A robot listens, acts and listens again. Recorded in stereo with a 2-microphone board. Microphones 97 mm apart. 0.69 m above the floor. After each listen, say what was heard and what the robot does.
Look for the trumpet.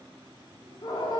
Keep listening.
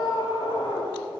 Keep listening.
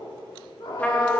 Turn 30° left.
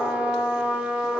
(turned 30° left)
So it is at 15° right. Turn 15° right.
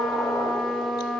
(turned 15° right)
Found it: a trumpet, straight ahead, 1 to 2 m away.